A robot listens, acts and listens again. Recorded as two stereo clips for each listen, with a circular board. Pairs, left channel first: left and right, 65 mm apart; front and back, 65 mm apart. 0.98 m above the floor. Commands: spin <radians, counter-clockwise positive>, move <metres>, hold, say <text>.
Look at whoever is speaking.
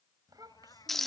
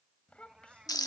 spin -1.22
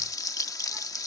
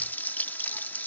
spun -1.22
hold
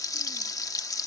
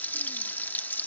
hold
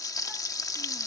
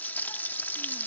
say I heard a child speaking from this way, but can't make it out now.